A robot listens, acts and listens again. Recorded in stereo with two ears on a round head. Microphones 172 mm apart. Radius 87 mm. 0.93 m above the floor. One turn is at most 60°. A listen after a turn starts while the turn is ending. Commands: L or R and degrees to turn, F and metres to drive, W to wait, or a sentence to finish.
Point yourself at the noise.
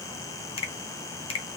L30
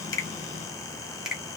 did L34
Found it: a finger snap, straight ahead, 1 to 2 m away.